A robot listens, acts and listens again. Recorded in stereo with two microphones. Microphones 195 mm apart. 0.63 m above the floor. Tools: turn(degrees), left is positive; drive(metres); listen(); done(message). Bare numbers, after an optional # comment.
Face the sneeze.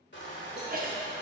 # The sneeze: about 45° right or 135° right.
turn(-45)
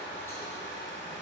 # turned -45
listen()
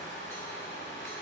done("I heard a sneeze, but can't make it out now. It was about straight ahead or 90° right.")